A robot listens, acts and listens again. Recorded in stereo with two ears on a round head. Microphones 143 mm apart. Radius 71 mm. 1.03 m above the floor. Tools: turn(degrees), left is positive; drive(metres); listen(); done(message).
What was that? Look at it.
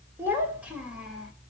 turn(degrees=30)
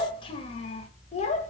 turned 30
turn(degrees=135)
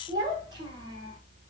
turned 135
turn(degrees=-30)
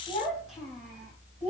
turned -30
done("Facing the child speaking, 2 to 4 m away.")